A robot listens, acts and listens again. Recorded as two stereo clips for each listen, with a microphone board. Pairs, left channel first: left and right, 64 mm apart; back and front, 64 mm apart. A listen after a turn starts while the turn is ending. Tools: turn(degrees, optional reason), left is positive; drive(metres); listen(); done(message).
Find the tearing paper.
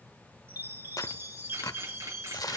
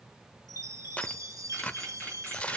turn(degrees=110, reason="The tearing paper: 110° left.")
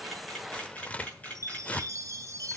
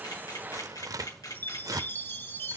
turn(degrees=20, reason="The tearing paper is now 20° left.")
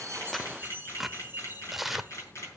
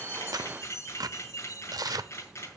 done("Found it: tearing paper, straight ahead, under 1 m away.")